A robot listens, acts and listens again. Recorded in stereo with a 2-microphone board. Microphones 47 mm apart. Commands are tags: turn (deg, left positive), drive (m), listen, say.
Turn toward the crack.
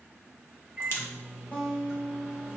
<turn deg="55"/>
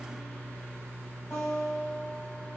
<listen/>
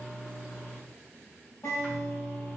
<say>I heard a crack, but can't make it out now. It was about straight ahead or 70° left.</say>